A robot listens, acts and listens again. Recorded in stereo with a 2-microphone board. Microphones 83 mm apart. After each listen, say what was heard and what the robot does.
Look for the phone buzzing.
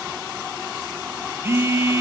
The phone buzzing: about 30° right or 150° right. Turn 30° right.
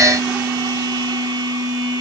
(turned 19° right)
So it is at 130° right. Turn 130° right.
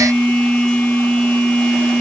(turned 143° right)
The phone buzzing is now 10° left. Turn 10° left.
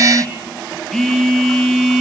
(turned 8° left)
Found it: a phone buzzing, straight ahead.